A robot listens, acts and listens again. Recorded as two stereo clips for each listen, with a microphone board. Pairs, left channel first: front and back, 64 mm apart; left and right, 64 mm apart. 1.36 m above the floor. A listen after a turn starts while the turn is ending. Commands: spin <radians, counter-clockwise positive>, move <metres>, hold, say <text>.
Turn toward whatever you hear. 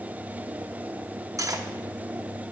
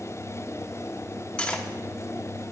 spin 2.88
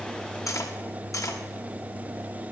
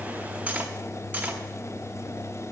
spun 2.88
spin -0.44
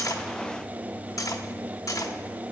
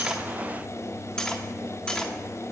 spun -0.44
spin 0.26
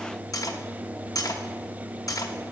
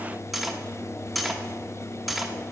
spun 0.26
say Facing the cutlery clinking, under 1 m away.